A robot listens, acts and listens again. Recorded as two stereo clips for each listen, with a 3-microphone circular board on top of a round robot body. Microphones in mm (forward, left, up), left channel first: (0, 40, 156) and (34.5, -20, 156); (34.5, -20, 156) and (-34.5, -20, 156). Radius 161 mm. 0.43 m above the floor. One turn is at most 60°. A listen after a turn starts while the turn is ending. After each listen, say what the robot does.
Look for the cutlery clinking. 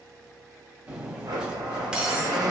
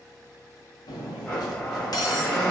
Turn 20° left.
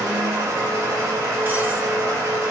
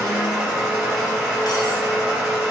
Keep listening.
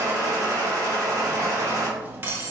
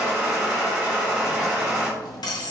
Facing the cutlery clinking, under 1 m away.